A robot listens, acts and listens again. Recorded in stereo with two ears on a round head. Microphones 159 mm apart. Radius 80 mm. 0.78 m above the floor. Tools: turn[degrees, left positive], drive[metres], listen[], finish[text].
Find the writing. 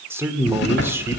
Thought: The writing: about 60° left or 120° left.
Action: turn[60]
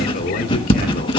Thought: So it is at 30° left.
Action: turn[30]
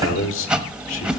Action: finish[Facing the writing.]